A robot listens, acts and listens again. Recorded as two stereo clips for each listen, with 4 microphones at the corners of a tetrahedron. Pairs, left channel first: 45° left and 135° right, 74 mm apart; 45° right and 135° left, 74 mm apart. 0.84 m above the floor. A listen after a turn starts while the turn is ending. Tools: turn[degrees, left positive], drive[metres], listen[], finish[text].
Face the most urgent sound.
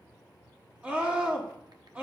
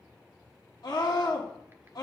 Thought: The scream: 65° right.
Action: turn[-65]
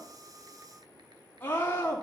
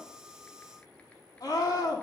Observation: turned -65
Thought: The scream is now 20° right.
Action: turn[-20]
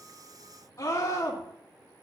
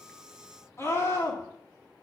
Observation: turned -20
Action: finish[Found it: a scream, straight ahead, 1 to 2 m away.]